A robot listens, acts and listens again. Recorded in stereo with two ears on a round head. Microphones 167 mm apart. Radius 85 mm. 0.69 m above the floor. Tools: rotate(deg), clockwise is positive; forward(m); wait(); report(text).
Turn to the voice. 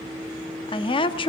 rotate(-30)
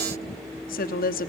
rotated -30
rotate(-115)
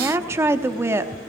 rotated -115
rotate(15)
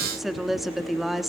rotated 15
report("Facing the woman speaking, under 1 m away.")